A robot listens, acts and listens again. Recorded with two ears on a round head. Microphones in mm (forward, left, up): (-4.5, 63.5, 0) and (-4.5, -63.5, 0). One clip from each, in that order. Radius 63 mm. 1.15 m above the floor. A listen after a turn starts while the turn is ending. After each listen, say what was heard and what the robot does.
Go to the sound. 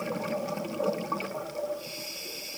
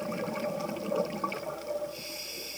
Keep listening.
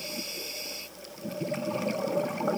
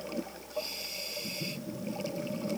Keep listening.
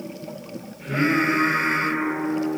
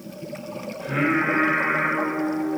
The singing: about 50° right or 130° right. Turn 50° right.
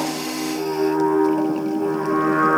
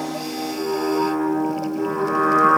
So it is at 80° right. Turn 80° right.
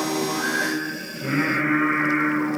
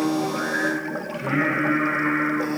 The singing is now 10° left. Turn 10° left.
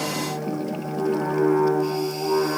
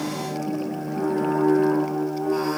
Drive 1.0 m forward.
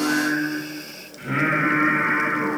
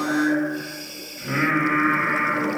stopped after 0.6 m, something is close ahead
Something is in my way. I am facing the singing but have not reached it.